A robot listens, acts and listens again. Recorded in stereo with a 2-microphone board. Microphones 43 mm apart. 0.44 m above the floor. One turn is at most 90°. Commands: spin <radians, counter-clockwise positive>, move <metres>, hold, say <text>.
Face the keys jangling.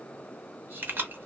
spin -0.87
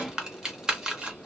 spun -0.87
spin -0.35
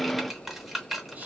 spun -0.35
say Facing the keys jangling, under 1 m away.